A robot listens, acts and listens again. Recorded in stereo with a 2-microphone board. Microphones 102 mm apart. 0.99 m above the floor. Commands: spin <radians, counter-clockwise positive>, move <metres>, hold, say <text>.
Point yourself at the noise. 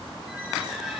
spin -0.52
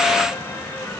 spin 0.26
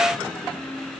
say Found it: a squeak, straight ahead.